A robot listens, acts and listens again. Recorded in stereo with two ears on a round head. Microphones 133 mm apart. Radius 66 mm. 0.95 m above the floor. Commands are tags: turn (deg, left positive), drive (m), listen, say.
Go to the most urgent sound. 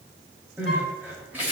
<turn deg="-30"/>
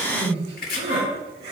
<turn deg="-140"/>
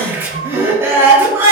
<turn deg="-20"/>
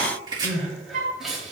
<drive m="1.0"/>
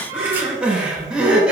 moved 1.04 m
<drive m="1.0"/>
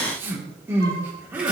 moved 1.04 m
<turn deg="-15"/>
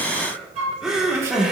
<drive m="1.0"/>
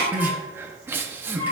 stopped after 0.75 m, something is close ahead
<turn deg="-15"/>
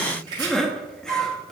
<say>Arrived at the crying, straight ahead.</say>